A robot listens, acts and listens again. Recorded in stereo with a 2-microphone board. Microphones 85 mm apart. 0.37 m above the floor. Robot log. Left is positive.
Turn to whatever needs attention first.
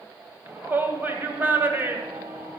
note: The shout: about 25° right or 155° right.
cmd yaw -25
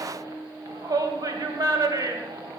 note: So it is at 125° right.
cmd yaw -125
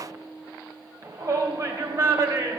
note: The shout is now 50° right.
cmd yaw -50
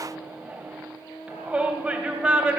note: The shout is now 15° right.
cmd yaw -15
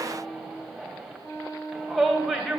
end: Facing the shout.